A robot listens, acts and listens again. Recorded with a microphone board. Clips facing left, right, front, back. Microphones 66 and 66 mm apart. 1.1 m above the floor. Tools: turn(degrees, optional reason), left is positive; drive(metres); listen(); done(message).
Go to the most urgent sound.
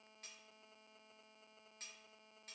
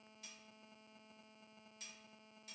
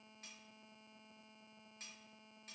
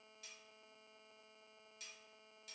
listen()
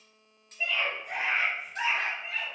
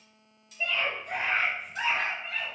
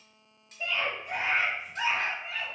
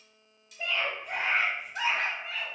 turn(degrees=170, reason="The scream: 170° left.")
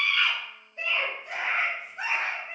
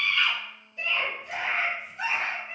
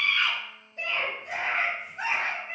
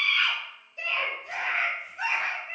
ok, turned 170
turn(degrees=45, reason="The scream is now 45° left.")
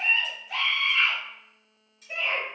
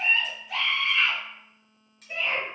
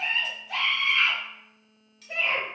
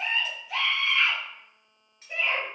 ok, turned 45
drive(metres=1.0)
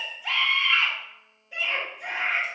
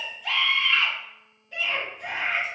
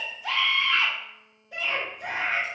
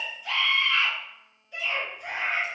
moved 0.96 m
turn(degrees=10, reason="The scream is now 10° left.")
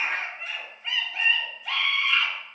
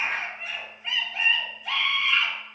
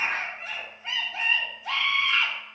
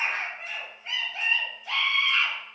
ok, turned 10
drive(metres=1.0)
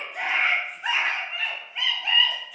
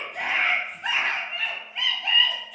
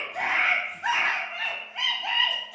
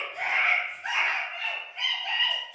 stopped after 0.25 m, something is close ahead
done("I am next to the scream.")